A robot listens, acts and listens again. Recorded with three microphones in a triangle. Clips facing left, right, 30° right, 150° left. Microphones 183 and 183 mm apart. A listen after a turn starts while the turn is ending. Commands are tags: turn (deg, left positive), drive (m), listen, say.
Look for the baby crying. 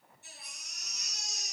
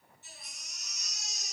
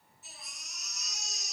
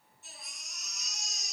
<turn deg="60"/>
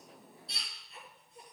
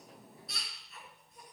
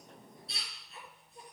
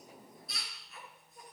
<turn deg="30"/>
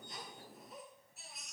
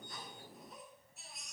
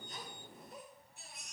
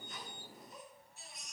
<say>Facing the baby crying.</say>